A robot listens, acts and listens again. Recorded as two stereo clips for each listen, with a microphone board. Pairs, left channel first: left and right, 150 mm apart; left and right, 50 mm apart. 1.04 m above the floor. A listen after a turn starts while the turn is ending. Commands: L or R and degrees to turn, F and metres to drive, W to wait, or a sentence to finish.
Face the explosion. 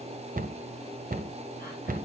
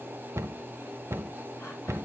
W
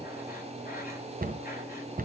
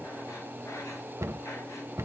W
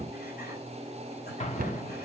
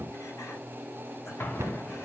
L50
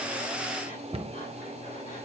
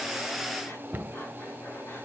W
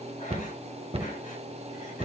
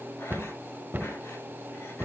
I heard an explosion, but can't make it out now. It was about straight ahead or 80° left.